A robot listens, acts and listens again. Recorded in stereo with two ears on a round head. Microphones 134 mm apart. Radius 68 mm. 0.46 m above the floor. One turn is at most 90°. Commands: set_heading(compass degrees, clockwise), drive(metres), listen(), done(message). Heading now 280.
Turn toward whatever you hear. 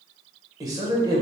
set_heading(305)
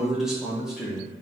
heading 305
done("Facing the man speaking.")